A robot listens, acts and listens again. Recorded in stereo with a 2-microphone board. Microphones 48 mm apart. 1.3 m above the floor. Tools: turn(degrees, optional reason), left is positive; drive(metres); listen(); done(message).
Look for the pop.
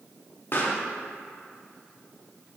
turn(degrees=50, reason="The pop: about 50° left or 130° left.")
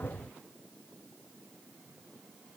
listen()
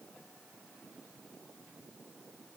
done("I heard a pop, but can't make it out now. It was about straight ahead or 80° left.")